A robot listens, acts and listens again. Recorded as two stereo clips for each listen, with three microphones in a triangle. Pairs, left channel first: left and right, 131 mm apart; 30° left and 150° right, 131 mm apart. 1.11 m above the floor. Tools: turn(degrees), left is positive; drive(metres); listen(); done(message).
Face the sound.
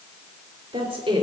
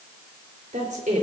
turn(degrees=-135)
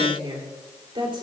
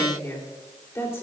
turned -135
turn(degrees=-40)
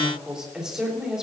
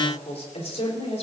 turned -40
done("Found it: a woman speaking, straight ahead, 2 to 4 m away.")